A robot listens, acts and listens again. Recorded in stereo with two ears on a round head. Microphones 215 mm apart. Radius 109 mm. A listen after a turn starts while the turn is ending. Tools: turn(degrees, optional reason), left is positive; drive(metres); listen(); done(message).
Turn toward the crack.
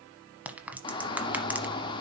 turn(degrees=-30)
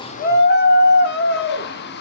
listen()
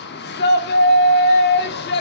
done("I heard a crack, but can't make it out now. It was about 25° left or 145° right.")